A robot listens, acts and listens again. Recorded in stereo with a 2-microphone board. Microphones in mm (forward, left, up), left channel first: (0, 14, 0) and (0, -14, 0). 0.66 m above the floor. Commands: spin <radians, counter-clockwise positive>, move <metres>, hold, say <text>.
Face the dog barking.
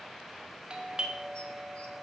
hold
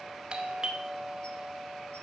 hold
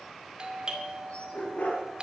spin 1.13
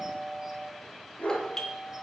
spin 0.96
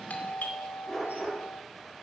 say Facing the dog barking, over 4 m away.